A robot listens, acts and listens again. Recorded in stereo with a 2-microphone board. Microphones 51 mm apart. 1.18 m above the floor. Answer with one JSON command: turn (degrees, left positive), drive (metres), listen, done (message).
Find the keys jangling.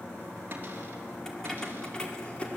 {"turn": 20}
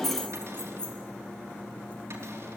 {"turn": 30}
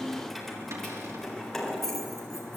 {"done": "Facing the keys jangling."}